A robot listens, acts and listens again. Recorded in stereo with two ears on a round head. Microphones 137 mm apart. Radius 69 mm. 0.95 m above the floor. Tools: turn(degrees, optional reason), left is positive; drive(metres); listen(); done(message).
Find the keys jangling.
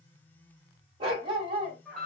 listen()
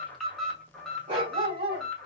listen()
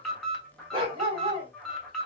done("I can't make out keys jangling to turn to.")